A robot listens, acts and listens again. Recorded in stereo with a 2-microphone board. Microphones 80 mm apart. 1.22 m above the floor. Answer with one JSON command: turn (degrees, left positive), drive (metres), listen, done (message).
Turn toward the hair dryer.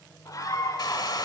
{"turn": 65}
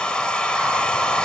{"turn": 15}
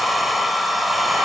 {"done": "Facing the hair dryer."}